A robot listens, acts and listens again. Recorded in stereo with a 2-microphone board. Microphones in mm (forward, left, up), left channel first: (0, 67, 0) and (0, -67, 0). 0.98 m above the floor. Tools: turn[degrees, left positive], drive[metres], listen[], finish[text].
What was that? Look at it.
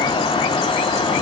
Action: listen[]
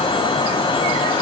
Action: listen[]
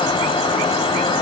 Action: finish[I can't make out anything.]